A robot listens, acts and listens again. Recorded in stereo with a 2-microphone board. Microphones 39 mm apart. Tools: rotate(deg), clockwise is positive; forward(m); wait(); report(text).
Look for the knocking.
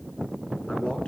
wait()
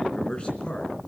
wait()
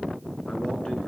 report("I can't make out knocking, only a man speaking.")